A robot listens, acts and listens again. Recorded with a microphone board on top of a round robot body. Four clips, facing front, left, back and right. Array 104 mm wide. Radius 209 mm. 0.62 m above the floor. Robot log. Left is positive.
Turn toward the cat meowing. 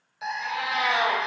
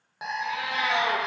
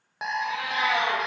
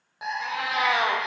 note: The cat meowing: 75° right.
cmd yaw -75
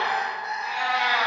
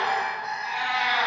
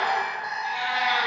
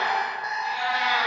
note: The cat meowing is now 10° right.
cmd yaw -10
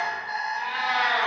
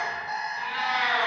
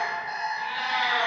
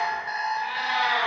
note: The cat meowing is now 10° right.
cmd yaw -10
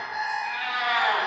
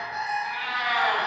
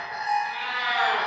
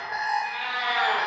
note: The cat meowing is now 10° right.
cmd yaw -10
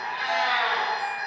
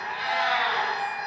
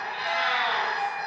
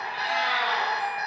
end: Facing the cat meowing, 2 to 4 m away.